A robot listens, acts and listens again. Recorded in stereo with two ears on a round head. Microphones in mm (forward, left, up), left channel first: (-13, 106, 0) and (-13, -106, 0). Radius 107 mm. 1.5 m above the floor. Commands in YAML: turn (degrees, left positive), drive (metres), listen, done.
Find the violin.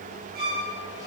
turn: -40
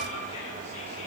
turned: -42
listen: true
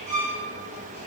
turn: -100
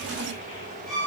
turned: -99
done: "Found it: a violin, straight ahead."